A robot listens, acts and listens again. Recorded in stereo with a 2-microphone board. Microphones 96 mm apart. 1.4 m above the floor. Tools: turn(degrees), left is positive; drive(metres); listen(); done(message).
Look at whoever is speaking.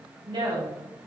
turn(degrees=-60)
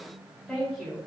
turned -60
done("Found it: a woman speaking, straight ahead.")